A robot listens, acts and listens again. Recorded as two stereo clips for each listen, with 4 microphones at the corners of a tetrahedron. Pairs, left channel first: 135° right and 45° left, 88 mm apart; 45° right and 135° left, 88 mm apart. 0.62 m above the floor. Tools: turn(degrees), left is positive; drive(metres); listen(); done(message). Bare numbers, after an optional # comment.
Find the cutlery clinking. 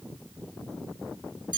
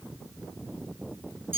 listen()
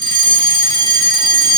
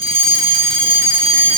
listen()
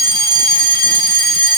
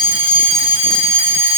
done("I can't make out cutlery clinking to turn to.")